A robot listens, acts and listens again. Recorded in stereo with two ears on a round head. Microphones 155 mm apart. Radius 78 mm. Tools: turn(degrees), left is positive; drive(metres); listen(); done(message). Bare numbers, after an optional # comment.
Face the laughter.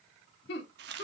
# The laughter: about 70° left or 110° left.
turn(70)
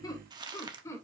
# So it is at 15° left.
turn(15)
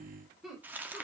done("Facing the laughter, 2 to 4 m away.")